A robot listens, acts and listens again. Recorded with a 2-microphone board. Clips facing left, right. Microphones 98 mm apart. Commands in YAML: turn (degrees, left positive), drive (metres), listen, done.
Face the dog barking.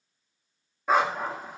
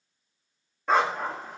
turn: 30
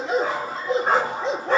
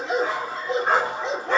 turn: 140
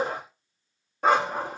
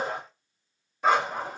turn: 70
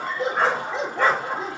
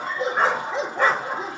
turn: -20
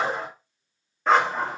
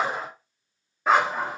turn: -10
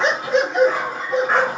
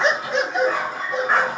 done: "Facing the dog barking."